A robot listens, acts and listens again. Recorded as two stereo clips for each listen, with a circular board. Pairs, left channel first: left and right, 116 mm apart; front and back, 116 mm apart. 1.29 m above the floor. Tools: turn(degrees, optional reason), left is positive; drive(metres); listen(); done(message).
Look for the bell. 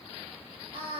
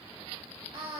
listen()
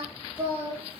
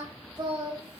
listen()
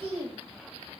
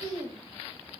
done("I can't make out a bell, only singing.")